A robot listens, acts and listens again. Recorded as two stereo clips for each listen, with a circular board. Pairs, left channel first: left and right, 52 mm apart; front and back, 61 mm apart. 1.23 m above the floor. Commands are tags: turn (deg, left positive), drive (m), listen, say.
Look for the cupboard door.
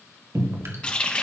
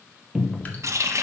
<turn deg="-95"/>
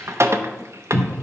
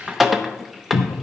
<turn deg="15"/>
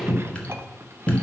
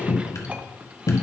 <say>Found it: a cupboard door, straight ahead, under 1 m away.</say>